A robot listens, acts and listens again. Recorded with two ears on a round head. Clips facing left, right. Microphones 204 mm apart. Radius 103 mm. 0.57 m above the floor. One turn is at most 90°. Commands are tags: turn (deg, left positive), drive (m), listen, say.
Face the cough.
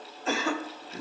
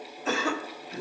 <turn deg="-70"/>
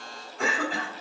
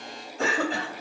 <turn deg="-25"/>
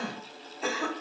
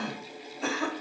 <say>Facing the cough, 1 to 2 m away.</say>